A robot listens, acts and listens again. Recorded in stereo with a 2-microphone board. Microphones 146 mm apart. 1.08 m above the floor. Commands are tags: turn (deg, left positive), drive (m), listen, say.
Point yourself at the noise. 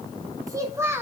<turn deg="-30"/>
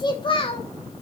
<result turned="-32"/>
<turn deg="40"/>
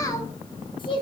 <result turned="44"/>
<turn deg="35"/>
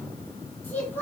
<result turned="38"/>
<turn deg="15"/>
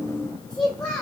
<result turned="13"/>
<turn deg="10"/>
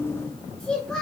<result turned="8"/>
<say>Found it: a child speaking, straight ahead, 2 to 4 m away.</say>